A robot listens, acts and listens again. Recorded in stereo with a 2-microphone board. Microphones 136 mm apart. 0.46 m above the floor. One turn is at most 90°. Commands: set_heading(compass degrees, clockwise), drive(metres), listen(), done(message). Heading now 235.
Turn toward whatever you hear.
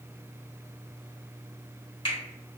set_heading(195)
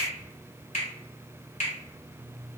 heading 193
set_heading(103)
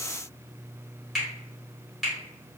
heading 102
done("Facing the finger snap.")